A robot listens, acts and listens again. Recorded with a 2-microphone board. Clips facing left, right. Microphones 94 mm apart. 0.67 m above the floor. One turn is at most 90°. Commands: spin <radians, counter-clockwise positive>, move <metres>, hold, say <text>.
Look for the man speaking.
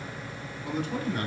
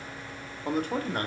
spin -0.87
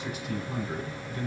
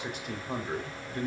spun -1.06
spin -0.96
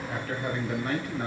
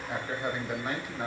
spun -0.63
spin -0.26
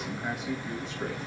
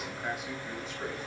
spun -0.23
say Facing the man speaking, 2 to 4 m away.